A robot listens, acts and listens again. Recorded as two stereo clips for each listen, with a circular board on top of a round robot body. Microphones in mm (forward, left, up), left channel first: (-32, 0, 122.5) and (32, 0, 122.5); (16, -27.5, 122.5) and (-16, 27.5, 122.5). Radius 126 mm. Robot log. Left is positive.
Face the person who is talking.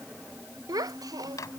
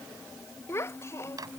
note: The child speaking: 10° right.
cmd yaw -10
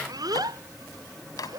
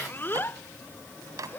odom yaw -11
end: Facing the child speaking.